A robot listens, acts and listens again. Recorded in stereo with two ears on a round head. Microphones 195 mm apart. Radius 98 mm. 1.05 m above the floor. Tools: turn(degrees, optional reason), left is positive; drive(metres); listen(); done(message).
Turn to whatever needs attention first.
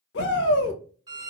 turn(degrees=55, reason="The shout: about 55° left or 125° left.")
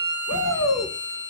turn(degrees=60, reason="So it is at 60° left.")
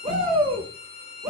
turn(degrees=-25, reason="The shout is now 25° right.")
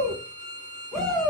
done("Facing the shout, 1 to 2 m away.")